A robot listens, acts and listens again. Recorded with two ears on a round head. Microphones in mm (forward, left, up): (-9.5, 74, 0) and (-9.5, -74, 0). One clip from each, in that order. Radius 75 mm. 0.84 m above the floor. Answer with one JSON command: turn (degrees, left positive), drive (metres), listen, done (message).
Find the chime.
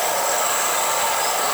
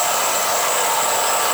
{"listen": true}
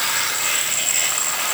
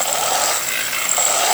{"listen": true}
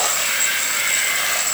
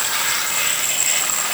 {"done": "I can't make out a chime to turn to."}